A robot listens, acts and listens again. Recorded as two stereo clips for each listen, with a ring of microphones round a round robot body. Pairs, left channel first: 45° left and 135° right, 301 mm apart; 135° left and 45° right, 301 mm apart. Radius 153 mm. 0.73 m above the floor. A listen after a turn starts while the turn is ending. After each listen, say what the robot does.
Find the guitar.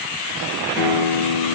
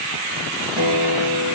Turn 15° right.
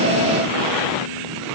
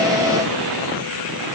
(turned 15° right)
Keep listening.
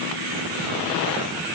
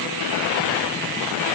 Keep listening.
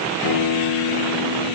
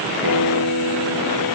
Facing the guitar.